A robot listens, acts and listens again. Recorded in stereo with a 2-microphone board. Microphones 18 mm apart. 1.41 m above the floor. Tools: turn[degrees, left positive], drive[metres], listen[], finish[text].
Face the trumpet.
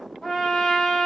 Thought: The trumpet: about 45° left or 135° left.
Action: turn[45]
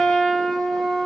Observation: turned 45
Thought: So it is at 85° left.
Action: turn[85]
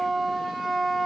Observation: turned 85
Thought: The trumpet is now 10° right.
Action: turn[-10]
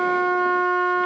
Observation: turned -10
Action: finish[Facing the trumpet.]